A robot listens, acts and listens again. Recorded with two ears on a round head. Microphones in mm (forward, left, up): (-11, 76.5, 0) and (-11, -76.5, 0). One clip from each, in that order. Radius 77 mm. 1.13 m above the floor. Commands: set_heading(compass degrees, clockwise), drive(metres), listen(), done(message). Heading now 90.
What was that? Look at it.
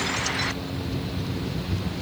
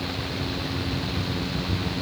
listen()
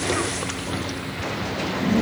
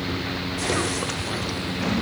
listen()
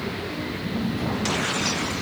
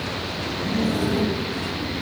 done("I can't make out anything.")